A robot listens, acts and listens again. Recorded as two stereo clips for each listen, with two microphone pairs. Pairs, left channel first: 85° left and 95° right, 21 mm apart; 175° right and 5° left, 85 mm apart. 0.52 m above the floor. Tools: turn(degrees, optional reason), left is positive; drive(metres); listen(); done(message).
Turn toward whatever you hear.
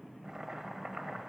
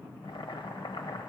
turn(degrees=-165, reason="The boiling: 165° right.")
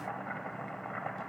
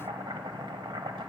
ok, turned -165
turn(degrees=10, reason="The boiling is now 10° left.")
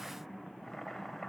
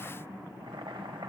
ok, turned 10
done("Found it: boiling, straight ahead, under 1 m away.")